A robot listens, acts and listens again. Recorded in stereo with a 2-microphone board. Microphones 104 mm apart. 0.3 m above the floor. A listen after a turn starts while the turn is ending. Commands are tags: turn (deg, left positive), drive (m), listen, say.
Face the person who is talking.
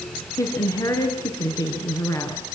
<turn deg="35"/>
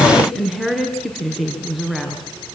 <say>Facing the woman speaking, 2 to 4 m away.</say>